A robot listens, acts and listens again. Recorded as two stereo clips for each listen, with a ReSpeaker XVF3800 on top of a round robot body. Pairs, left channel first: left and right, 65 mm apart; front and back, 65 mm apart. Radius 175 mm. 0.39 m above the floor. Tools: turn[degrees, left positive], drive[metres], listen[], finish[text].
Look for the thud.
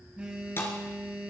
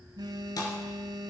Thought: The thud: 35° left.
Action: turn[35]
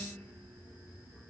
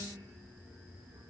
Action: finish[Facing where the thud came from. I can't hear it now.]